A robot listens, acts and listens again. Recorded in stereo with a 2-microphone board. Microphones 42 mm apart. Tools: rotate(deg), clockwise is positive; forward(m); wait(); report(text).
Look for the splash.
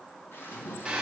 rotate(-65)
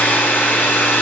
wait()
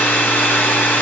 report("I heard a splash, but can't make it out now. It was about straight ahead or 50° left.")